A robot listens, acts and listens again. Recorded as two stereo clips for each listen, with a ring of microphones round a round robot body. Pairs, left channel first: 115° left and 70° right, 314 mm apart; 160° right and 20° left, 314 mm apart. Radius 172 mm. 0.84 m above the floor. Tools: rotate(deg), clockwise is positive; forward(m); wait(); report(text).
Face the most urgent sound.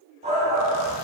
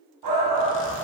report("Facing the shout, 1 to 2 m away.")